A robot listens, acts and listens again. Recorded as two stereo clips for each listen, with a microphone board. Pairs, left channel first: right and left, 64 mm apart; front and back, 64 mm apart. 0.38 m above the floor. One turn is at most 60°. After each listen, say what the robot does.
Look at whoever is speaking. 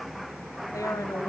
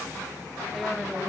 Keep listening.
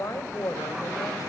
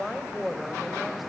Turn 60° right.
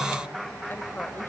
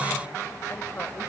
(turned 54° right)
Turn 40° right.
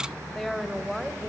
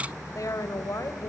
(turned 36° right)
Facing the woman speaking.